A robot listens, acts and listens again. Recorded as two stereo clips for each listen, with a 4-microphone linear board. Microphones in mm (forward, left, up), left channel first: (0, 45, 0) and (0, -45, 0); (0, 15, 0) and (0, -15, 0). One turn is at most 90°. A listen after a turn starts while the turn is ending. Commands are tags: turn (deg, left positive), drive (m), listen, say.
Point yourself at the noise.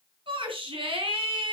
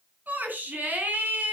<turn deg="-75"/>
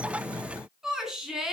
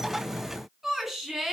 <say>Facing the shout, 2 to 4 m away.</say>